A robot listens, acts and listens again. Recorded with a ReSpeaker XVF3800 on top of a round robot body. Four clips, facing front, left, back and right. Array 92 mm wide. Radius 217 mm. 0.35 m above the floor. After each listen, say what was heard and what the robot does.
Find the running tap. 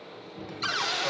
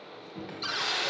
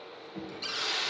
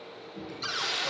The running tap: 70° left. Turn 70° left.
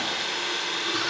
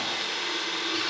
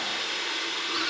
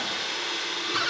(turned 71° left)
Facing the running tap, 2 to 4 m away.